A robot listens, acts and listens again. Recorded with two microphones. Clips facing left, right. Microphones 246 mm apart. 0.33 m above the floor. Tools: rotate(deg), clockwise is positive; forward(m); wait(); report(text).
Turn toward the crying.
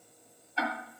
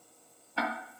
wait()
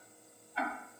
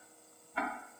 wait()
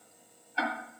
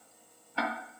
report("I can't make out crying, only ticking.")